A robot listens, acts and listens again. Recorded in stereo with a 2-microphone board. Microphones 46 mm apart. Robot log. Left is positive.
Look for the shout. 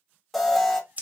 cmd idle
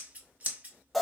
cmd idle
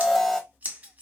end: I can't make out a shout, only an alarm and scissors.